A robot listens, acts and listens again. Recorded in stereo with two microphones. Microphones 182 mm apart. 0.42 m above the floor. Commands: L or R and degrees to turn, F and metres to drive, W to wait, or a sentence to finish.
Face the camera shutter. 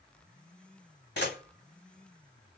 L70
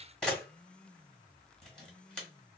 Found it: a camera shutter, straight ahead, 1 to 2 m away.